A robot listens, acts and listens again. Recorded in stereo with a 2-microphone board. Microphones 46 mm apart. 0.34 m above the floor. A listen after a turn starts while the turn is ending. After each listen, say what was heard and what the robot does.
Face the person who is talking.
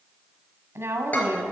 The woman speaking: about 65° right or 115° right. Turn 65° right.
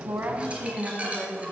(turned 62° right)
So it is at 15° right. Turn 15° right.
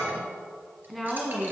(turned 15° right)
Found it: a woman speaking, straight ahead, 2 to 4 m away.